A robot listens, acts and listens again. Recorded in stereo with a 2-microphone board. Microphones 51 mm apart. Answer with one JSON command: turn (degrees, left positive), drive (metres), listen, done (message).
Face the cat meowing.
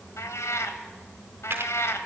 {"turn": 70}
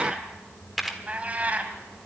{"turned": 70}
{"turn": -30}
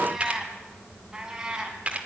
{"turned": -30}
{"turn": -15}
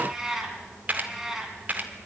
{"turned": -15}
{"turn": -10}
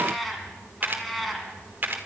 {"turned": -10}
{"done": "Found it: a cat meowing, straight ahead, 2 to 4 m away."}